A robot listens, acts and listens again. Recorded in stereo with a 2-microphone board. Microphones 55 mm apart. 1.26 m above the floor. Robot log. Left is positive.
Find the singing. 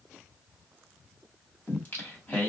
note: The singing: about 30° left or 150° left.
cmd yaw +30
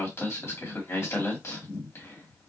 note: So it is at 120° left.
cmd yaw +120
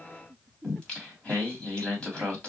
note: The singing is now 20° left.
cmd yaw +20
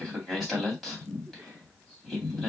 end: Facing the singing.